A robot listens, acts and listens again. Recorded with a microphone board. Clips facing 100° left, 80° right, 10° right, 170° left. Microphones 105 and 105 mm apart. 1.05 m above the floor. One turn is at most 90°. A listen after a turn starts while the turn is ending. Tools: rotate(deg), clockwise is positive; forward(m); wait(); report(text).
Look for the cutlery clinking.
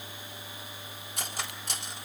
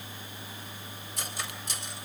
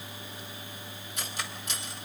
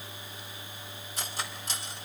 rotate(-90)
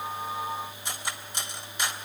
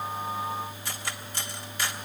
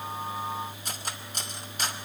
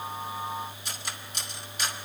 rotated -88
rotate(-30)
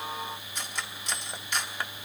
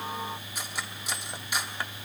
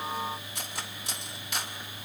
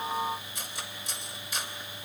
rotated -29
report("Facing the cutlery clinking, 1 to 2 m away.")